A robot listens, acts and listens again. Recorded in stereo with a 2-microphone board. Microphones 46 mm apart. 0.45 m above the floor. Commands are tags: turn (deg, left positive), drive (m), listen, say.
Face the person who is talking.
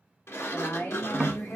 <turn deg="55"/>
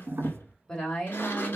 <turn deg="20"/>
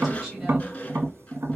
<listen/>
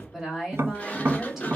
<say>Facing the woman speaking.</say>